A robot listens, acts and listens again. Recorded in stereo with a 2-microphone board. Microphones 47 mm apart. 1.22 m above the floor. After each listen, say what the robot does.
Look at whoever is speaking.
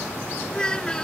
Turn 15° left.
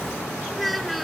Facing the child speaking.